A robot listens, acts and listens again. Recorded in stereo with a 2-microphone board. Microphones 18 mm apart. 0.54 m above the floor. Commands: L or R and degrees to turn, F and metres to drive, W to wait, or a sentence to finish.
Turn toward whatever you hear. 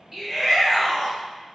R30
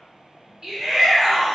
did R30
R140
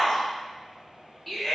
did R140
Found it: a shout, straight ahead.